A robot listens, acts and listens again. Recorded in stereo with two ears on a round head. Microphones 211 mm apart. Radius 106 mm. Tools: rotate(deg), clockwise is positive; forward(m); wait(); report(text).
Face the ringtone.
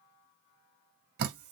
wait()
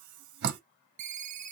rotate(30)
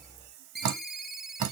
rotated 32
report("Found it: a ringtone, straight ahead, under 1 m away.")